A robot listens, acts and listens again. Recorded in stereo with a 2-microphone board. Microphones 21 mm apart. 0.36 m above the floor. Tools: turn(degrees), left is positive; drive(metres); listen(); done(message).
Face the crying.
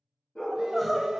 turn(degrees=30)
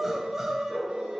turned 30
turn(degrees=-25)
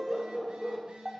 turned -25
done("Found it: crying, straight ahead, under 1 m away.")